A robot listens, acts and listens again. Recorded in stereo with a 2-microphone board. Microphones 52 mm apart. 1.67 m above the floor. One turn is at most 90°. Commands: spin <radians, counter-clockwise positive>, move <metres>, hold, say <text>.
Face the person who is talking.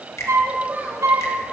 spin -0.61
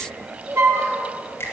spin -1.57
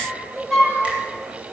spin -0.61
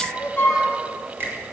spin -0.17
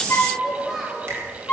say Found it: a child speaking, straight ahead.